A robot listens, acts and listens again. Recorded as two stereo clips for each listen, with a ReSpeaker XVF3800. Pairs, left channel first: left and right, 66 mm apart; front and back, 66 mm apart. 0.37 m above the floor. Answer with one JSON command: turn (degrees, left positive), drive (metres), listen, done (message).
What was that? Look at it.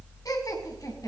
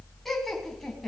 {"turn": 85}
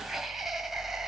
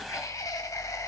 {"done": "Facing the laughter."}